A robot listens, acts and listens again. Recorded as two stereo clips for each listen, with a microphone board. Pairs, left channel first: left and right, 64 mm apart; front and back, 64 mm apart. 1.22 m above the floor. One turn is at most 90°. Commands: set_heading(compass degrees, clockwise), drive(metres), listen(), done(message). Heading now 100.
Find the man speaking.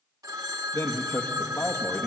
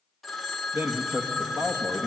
set_heading(10)
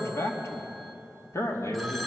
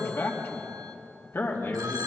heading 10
set_heading(320)
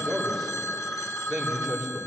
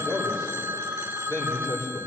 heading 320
done("Found it: a man speaking, straight ahead.")